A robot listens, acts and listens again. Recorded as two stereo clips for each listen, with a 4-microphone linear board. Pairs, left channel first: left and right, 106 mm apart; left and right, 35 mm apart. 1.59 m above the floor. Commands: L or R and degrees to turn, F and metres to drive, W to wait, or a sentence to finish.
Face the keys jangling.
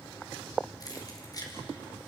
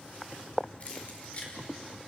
L35
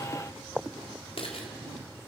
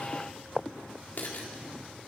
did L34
L120
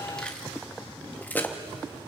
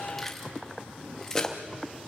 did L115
L20
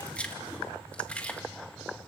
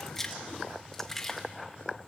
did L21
L15
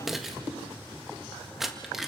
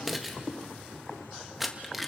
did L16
Found it: keys jangling, straight ahead, 1 to 2 m away.